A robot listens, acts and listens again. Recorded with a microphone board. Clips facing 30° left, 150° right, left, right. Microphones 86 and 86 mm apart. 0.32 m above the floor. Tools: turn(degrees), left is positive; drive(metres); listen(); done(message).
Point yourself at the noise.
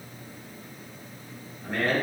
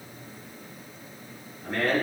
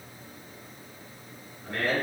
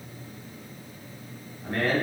turn(degrees=-55)
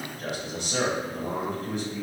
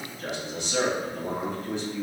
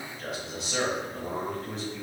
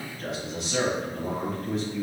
done("Found it: a man speaking, straight ahead, 1 to 2 m away.")